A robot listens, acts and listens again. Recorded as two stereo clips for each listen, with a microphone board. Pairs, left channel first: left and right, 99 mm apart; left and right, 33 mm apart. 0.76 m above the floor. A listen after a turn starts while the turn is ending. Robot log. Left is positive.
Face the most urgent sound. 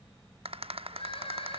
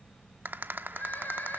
note: The crying: about 65° left or 115° left.
cmd yaw +65
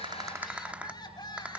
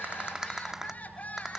note: So it is at 45° left.
cmd yaw +45
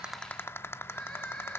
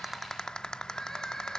note: The crying is now 10° left.
cmd yaw +10
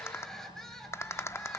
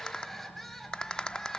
end: Facing the crying, over 4 m away.